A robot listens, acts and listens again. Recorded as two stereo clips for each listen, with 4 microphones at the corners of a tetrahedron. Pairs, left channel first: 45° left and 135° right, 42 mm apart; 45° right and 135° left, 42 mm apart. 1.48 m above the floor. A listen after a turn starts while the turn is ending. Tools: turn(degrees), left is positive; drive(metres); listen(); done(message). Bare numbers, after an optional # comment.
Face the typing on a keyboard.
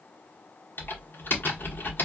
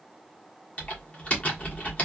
# The typing on a keyboard: 15° left.
turn(15)
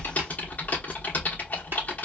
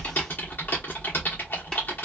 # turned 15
done("Found it: typing on a keyboard, straight ahead.")